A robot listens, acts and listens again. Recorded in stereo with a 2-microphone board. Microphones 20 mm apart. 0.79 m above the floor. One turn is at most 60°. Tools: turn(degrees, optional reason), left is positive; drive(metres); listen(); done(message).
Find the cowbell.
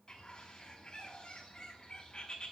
listen()
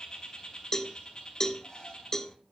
turn(degrees=25, reason="The cowbell: about 25° left or 155° left.")
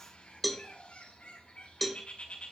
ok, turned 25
done("Found it: a cowbell, straight ahead.")